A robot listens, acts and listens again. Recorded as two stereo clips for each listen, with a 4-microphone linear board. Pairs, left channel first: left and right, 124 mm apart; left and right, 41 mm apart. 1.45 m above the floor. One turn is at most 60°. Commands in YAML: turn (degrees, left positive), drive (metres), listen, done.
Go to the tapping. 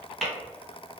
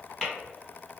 turn: 30
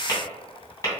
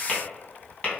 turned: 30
turn: 60
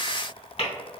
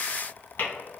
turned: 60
turn: 60
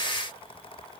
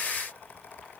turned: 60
turn: 60
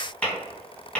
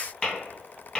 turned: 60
turn: 10
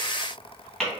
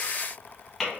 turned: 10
drive: 1.0
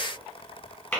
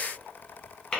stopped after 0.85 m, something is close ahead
turn: 15
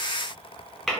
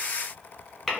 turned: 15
done: "I am next to the tapping."